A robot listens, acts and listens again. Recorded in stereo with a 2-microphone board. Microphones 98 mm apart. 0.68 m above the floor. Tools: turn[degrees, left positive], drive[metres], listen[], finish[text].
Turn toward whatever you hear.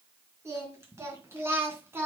Thought: The singing: about 25° right or 155° right.
Action: turn[-25]
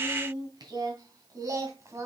Thought: The singing: about 30° right or 150° right.
Action: turn[-30]
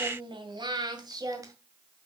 Thought: The singing: about 40° right or 140° right.
Action: turn[-40]
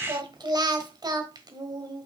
Thought: So it is at 135° right.
Action: turn[-135]
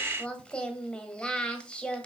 Thought: The singing is now 10° left.
Action: turn[10]
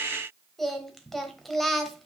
Action: finish[Facing the singing, 1 to 2 m away.]